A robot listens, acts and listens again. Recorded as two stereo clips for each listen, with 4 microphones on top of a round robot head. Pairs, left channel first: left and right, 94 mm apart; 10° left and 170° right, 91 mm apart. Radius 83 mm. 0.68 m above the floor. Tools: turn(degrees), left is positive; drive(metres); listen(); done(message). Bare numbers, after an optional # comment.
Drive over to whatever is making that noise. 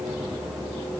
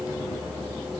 listen()
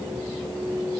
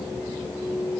listen()
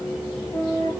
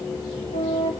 # The flute: 30° left.
turn(30)
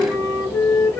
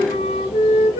# The flute is now 20° left.
turn(20)
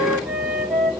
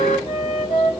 drive(1.0)
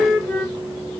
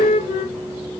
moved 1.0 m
# The flute is now 10° left.
turn(10)
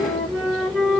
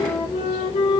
drive(1.0)
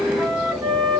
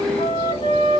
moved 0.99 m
drive(1.0)
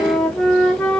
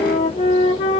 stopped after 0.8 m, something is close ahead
done("Arrived at the flute, straight ahead.")